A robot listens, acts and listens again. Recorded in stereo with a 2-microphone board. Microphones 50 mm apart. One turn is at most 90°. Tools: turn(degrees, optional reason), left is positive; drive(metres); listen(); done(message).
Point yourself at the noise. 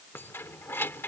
turn(degrees=50, reason="The keys jangling: about 50° left or 130° left.")
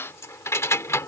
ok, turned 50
turn(degrees=75, reason="So it is at 75° left.")
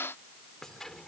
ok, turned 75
turn(degrees=10, reason="The keys jangling is now 10° left.")
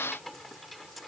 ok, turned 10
done("Facing the keys jangling.")